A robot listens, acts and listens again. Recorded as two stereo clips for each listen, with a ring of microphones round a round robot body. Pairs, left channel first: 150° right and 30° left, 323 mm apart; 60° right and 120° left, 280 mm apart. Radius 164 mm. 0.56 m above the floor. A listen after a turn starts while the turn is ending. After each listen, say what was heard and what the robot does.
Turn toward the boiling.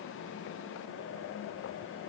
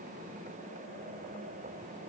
Keep listening.
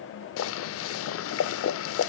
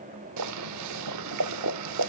The boiling: 160° left. Turn 160° left.
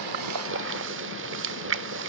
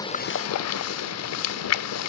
The boiling is now 25° right. Turn 25° right.
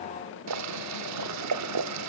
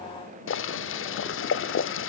The boiling is now 10° right. Turn 10° right.
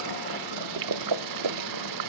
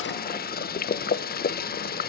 Found it: boiling, straight ahead.